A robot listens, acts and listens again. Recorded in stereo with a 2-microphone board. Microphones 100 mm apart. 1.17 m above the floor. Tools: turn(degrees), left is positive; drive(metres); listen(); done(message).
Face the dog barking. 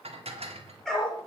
turn(degrees=30)
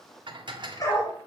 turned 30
turn(degrees=150)
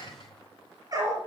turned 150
turn(degrees=-35)
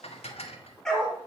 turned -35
done("Facing the dog barking, over 4 m away.")